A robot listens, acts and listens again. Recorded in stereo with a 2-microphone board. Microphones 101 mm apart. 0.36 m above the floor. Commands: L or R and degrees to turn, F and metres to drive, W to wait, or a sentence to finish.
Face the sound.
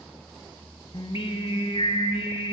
L70
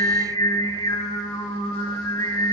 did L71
L40
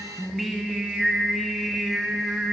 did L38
Facing the singing.